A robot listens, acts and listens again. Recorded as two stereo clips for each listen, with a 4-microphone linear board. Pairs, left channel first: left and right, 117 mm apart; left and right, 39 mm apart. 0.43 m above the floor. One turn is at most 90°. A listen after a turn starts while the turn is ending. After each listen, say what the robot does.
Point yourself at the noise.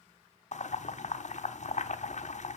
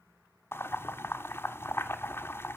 Turn 90° left.
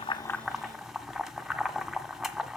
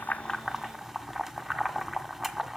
Facing the boiling, 1 to 2 m away.